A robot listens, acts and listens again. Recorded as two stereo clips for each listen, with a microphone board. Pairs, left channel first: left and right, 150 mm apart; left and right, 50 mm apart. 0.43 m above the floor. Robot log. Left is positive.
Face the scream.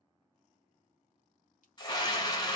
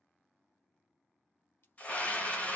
note: The scream: about 30° left or 150° left.
cmd yaw +30
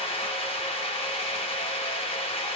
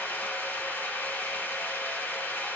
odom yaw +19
note: So it is at 140° left.
cmd yaw +140
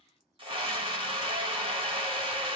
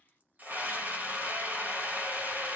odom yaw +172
note: The scream is now 45° right.
cmd yaw -45
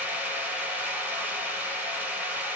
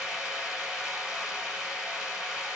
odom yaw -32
note: The scream is now 15° right.
cmd yaw -15
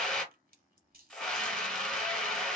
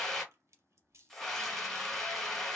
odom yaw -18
end: Found it: a scream, straight ahead, 1 to 2 m away.